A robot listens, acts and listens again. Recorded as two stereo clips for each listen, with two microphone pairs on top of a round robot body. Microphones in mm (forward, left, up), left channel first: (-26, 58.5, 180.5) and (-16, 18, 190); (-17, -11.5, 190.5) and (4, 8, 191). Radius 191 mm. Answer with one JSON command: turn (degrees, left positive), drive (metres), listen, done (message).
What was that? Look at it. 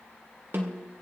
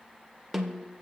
{"turn": -45}
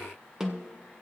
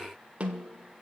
{"done": "Found it: a snare drum, straight ahead, 1 to 2 m away."}